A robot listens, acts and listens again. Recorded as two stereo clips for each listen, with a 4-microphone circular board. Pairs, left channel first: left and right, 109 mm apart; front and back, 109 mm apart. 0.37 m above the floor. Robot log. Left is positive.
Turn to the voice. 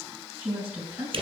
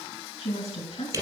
note: The woman speaking: 15° right.
cmd yaw -15
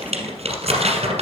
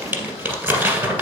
cmd idle
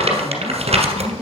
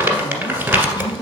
end: Facing the woman speaking, 2 to 4 m away.